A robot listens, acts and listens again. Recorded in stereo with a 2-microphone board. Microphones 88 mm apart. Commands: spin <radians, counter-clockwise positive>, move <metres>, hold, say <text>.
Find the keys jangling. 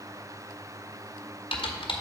hold
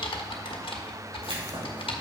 spin -1.57
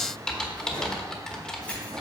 spin 0.26
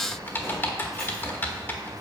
say Facing the keys jangling.